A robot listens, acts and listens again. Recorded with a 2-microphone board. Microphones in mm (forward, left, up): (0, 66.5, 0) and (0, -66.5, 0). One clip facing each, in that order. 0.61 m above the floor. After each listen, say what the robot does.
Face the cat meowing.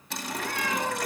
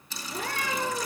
Turn 50° right.
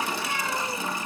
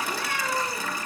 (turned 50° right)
Turn 85° right.
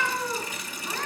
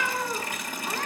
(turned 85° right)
Turn 10° right.
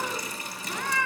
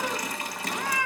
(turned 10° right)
Turn 10° right.
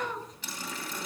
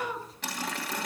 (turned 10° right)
Facing the cat meowing, over 4 m away.